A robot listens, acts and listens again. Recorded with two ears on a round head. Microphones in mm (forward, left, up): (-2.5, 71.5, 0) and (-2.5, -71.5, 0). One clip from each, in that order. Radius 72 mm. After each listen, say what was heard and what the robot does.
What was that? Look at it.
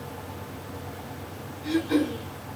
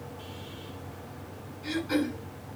The throat clearing: about 20° right or 160° right. Turn 20° right.
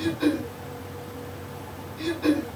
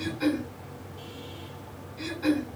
Facing the throat clearing, over 4 m away.